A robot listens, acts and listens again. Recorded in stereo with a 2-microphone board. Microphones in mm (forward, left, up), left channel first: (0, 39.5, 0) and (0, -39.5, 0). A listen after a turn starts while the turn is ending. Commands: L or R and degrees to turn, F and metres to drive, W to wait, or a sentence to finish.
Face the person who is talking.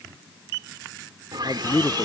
L90
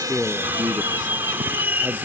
Found it: a man speaking, straight ahead.